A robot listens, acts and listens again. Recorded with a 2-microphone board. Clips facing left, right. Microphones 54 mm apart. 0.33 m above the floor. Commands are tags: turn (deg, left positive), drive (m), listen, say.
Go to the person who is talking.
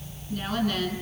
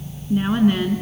<turn deg="-25"/>
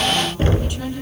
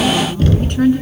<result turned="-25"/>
<turn deg="-130"/>
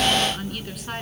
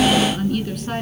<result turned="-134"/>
<drive m="1.0"/>
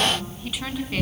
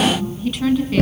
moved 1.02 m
<drive m="1.0"/>
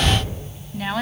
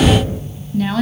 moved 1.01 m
<turn deg="10"/>
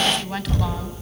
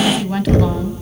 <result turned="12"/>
<drive m="1.0"/>
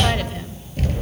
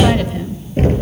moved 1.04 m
<listen/>
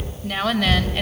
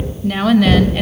<drive m="1.0"/>
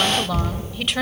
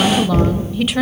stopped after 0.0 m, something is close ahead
<say>I am next to the woman speaking.</say>